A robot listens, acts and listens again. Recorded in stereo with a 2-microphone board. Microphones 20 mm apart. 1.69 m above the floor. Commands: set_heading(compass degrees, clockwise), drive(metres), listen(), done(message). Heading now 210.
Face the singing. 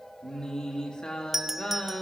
set_heading(170)
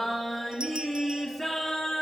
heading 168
done("Facing the singing.")